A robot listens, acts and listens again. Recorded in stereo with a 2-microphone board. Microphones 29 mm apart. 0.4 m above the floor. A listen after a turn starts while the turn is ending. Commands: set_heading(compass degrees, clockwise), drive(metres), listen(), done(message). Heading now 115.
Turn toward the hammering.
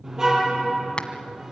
set_heading(75)
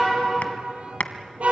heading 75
set_heading(335)
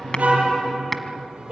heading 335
listen()
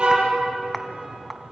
listen()
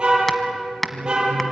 set_heading(325)
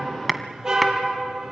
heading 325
done("Facing the hammering.")